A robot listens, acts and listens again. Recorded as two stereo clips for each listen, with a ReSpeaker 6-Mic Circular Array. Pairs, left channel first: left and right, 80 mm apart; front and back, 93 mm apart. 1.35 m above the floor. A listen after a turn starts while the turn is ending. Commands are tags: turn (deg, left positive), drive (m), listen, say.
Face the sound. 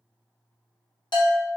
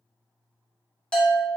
<turn deg="80"/>
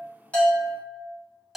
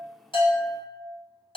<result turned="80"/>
<say>Facing the bell.</say>